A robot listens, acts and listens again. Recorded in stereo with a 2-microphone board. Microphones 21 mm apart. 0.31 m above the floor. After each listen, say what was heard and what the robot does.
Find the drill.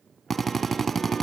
The drill: about 15° left or 165° left. Turn 15° left.
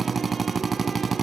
Facing the drill, 1 to 2 m away.